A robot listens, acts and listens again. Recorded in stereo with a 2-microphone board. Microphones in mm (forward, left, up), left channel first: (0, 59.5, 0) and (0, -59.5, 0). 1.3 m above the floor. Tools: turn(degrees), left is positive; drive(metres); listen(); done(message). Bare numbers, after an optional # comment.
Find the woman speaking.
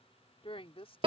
# The woman speaking: about 55° left or 125° left.
turn(55)
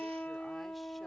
listen()
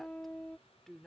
done("Facing the woman speaking.")